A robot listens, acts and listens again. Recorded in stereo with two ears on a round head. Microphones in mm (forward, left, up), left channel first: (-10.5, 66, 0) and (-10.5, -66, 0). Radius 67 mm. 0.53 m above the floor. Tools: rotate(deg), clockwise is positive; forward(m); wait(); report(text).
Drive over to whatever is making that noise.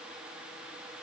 wait()
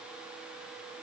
wait()
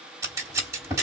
rotate(20)
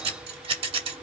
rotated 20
rotate(135)
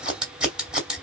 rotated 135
forward(1.0)
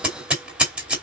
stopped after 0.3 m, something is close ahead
report("Something is in my way. I am facing the scissors but have not reached it.")